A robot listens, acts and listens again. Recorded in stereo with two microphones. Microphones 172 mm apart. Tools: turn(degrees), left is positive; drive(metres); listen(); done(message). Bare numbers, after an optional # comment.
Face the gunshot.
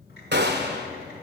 # The gunshot: about 70° right or 110° right.
turn(-70)
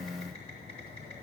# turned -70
listen()
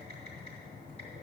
done("I heard a gunshot, but can't make it out now. It was about straight ahead or 40° right.")